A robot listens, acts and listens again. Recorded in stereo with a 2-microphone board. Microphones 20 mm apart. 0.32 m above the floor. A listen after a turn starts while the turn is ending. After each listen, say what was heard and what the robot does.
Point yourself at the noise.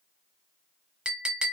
The clink: about 55° right or 125° right. Turn 55° right.
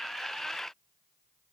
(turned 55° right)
Keep listening.
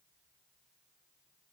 Keep listening.
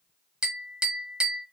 So it is at 50° right. Turn 50° right.
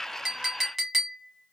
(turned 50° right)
The clink is now 10° right. Turn 10° right.
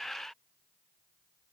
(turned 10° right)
Keep listening.
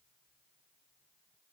Keep listening.
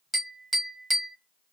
Facing the clink, under 1 m away.